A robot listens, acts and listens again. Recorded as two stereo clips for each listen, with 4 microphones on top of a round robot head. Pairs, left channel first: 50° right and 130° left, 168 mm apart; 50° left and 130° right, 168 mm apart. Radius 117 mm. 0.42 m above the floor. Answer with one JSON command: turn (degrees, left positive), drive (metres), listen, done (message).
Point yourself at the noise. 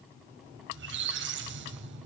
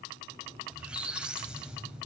{"turn": 145}
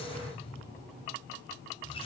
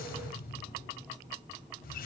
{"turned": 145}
{"turn": 10}
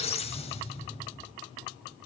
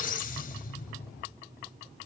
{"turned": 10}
{"done": "Found it: a squeak, straight ahead, under 1 m away."}